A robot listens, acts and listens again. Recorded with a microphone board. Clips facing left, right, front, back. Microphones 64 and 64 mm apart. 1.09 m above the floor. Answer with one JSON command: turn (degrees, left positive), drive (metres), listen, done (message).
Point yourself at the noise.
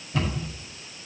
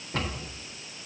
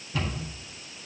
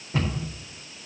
{"turn": -125}
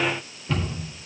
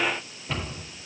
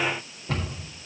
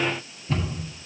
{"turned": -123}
{"done": "Facing the cupboard door, over 4 m away."}